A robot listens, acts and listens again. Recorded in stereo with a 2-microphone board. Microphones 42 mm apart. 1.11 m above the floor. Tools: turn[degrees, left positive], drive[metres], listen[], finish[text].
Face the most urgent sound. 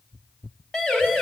Thought: The siren: about 20° left or 160° left.
Action: turn[20]
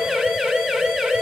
Action: finish[Facing the siren, over 4 m away.]